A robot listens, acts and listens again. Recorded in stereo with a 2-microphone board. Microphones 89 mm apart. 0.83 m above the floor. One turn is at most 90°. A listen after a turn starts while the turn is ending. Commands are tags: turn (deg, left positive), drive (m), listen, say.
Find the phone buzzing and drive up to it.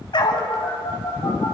<turn deg="70"/>
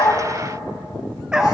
<listen/>
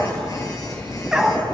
<turn deg="40"/>
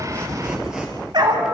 <listen/>
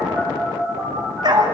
<drive m="1.0"/>
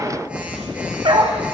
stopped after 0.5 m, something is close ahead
<turn deg="-15"/>
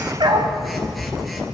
<say>Something is in my way. I am facing the phone buzzing but have not reached it.</say>